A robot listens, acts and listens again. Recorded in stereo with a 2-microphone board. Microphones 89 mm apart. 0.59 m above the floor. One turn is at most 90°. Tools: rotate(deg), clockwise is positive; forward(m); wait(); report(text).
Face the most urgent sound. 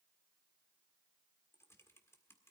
wait()
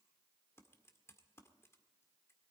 wait()
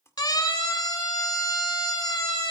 rotate(-50)
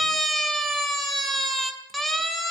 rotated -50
report("Found it: a siren, straight ahead, 2 to 4 m away.")